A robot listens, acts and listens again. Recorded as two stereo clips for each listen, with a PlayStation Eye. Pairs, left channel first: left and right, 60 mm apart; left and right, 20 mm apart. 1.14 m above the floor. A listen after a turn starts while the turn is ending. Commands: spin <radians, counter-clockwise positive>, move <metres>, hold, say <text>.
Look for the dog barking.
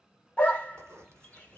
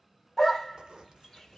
spin 0.35
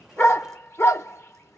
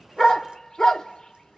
spin 2.36
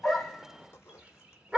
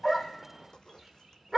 spin -0.35
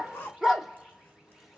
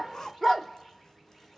say Facing the dog barking, 1 to 2 m away.